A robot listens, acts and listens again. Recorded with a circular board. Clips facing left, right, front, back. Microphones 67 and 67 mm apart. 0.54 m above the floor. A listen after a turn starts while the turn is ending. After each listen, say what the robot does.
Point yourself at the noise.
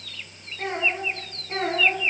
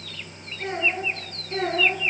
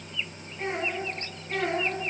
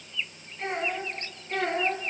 Turn 80° left.
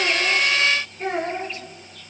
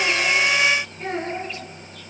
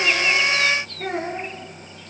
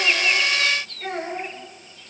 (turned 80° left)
Turn 20° left.
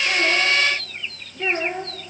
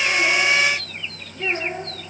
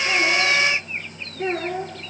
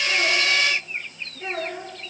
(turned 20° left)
Facing the child speaking, over 4 m away.